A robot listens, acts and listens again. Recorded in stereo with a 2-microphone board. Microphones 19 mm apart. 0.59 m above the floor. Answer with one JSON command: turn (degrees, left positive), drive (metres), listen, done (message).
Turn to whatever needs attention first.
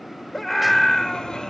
{"turn": 30}
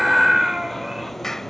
{"turn": -20}
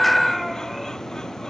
{"done": "Found it: a scream, straight ahead."}